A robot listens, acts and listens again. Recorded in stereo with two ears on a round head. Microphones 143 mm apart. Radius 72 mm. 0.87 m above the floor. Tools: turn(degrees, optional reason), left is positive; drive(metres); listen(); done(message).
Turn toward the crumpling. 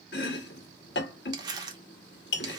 turn(degrees=-25, reason="The crumpling: about 25° right or 155° right.")
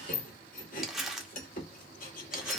done("Facing the crumpling.")